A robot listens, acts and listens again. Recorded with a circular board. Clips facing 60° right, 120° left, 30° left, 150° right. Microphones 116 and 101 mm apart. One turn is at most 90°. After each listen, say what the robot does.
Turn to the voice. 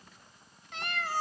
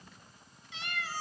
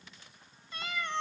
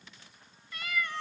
Keep listening.
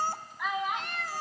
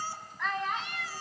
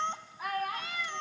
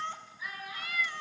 Turn 20° left.
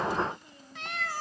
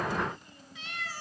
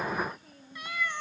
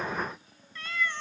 Keep listening.
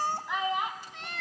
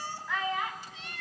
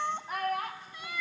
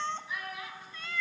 Turn 10° left.
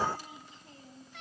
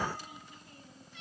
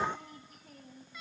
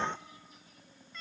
Facing the child speaking, 1 to 2 m away.